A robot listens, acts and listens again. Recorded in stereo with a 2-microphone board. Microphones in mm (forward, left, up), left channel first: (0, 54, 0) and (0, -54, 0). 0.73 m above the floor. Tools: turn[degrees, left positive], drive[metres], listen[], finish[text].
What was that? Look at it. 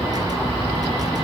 Action: listen[]
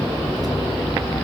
Action: listen[]
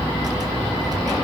Action: finish[I can't make out anything to turn to.]